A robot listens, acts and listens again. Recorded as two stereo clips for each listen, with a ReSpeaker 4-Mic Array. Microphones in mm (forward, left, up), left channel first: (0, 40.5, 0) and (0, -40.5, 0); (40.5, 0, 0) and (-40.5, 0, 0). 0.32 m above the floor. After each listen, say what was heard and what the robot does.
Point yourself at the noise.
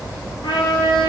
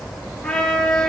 The trumpet: 85° left. Turn 85° left.
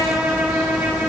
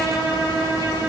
The trumpet is now 20° right. Turn 20° right.
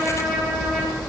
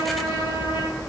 Facing the trumpet.